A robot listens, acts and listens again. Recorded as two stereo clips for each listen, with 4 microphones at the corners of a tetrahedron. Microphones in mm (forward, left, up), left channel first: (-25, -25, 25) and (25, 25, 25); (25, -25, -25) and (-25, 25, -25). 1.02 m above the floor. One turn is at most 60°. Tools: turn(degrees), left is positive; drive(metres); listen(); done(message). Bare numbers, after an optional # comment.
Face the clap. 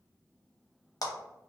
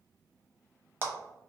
# The clap: 165° right.
turn(-60)
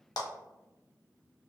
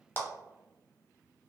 # The clap is now 105° right.
turn(-60)
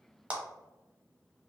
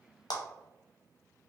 # The clap is now 25° right.
turn(-25)
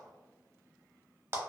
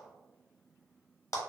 done("Found it: a clap, straight ahead, under 1 m away.")